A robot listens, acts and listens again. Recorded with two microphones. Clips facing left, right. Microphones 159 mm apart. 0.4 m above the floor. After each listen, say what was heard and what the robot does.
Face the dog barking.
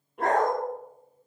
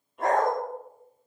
The dog barking: about 60° left or 120° left. Turn 60° left.
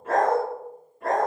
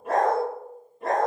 So it is at 20° right. Turn 20° right.
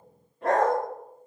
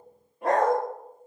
The dog barking is now 15° right. Turn 15° right.
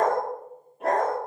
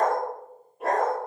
Facing the dog barking.